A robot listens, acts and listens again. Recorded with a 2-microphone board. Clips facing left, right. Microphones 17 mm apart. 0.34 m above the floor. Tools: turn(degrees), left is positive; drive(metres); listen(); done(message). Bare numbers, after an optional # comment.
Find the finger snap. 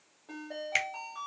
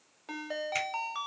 # The finger snap: about 55° left or 125° left.
turn(55)
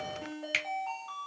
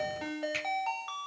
# So it is at 50° left.
turn(50)
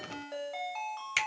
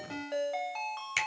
# The finger snap is now 10° left.
turn(10)
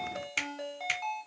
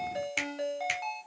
done("Facing the finger snap.")